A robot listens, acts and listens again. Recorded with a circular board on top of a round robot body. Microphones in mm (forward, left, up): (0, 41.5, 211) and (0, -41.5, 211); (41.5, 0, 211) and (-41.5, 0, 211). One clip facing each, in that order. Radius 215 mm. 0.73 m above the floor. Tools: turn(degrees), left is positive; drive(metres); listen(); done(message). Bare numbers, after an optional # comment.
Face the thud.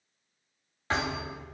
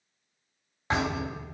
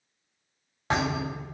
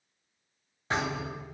# The thud: 15° right.
turn(-15)
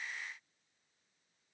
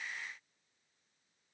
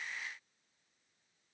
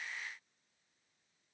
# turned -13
done("I heard a thud from this way, but can't make it out now.")